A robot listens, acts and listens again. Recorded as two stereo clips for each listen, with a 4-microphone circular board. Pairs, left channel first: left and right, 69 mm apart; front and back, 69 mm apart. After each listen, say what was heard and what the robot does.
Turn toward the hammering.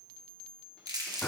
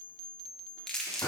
Keep listening.
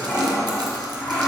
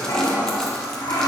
Keep listening.
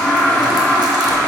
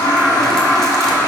I can't make out hammering to turn to.